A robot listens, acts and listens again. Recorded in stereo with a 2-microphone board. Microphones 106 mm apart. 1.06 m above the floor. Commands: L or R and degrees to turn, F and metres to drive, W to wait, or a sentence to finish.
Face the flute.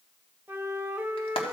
R20
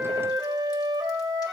R135
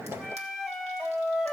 Facing the flute.